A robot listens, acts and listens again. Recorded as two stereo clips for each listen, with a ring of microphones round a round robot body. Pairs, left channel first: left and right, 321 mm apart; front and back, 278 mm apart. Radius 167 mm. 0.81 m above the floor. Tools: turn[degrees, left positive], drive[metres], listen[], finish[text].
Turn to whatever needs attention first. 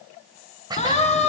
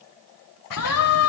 Thought: The siren: 20° left.
Action: turn[20]
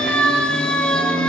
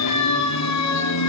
Action: finish[Facing the siren.]